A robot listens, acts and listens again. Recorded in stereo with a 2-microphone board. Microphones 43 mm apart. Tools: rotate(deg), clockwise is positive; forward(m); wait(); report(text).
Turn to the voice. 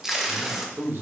rotate(70)
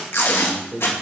rotate(25)
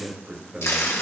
rotate(15)
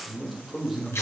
report("Found it: a man speaking, straight ahead, 2 to 4 m away.")